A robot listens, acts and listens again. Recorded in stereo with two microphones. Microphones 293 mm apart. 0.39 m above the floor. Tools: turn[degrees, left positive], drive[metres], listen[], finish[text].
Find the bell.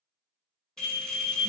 Action: turn[30]
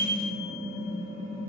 Thought: So it is at 30° right.
Action: turn[-30]
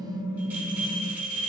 Action: finish[Facing the bell.]